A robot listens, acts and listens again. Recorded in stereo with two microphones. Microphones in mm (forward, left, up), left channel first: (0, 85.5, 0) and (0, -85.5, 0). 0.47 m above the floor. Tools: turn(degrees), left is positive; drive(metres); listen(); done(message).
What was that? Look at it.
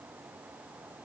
listen()
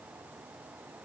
listen()
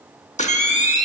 turn(degrees=45)
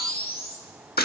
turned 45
turn(degrees=85)
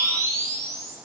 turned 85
turn(degrees=-20)
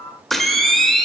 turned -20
done("Facing the camera shutter, under 1 m away.")